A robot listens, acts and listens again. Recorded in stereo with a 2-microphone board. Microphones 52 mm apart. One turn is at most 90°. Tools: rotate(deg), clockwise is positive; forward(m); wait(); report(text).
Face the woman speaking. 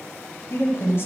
rotate(-55)
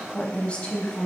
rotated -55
rotate(-15)
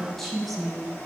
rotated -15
report("Found it: a woman speaking, straight ahead, 1 to 2 m away.")